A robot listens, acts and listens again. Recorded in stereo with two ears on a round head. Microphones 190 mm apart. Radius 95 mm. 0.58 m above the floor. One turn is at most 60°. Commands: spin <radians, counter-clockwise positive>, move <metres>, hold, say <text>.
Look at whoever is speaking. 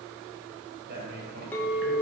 spin -0.87
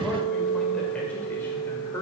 spin 0.26
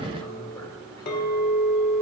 hold
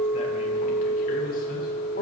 hold
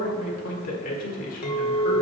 spin 0.70
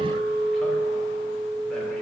hold
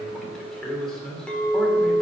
say Facing the man speaking.